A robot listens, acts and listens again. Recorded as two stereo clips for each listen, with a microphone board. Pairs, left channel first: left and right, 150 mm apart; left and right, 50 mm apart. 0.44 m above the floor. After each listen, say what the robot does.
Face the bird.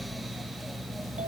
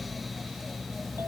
Keep listening.
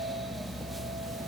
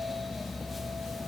Keep listening.
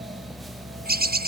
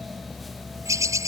Turn 90° right.
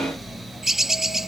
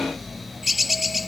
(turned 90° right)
Facing the bird.